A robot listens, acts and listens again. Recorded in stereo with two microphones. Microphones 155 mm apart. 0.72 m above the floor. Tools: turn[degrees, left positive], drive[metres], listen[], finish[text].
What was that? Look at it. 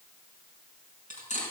Thought: The cutlery clinking: about 55° left or 125° left.
Action: turn[55]
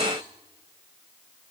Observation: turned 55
Action: listen[]
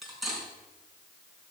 Action: finish[Facing the cutlery clinking, over 4 m away.]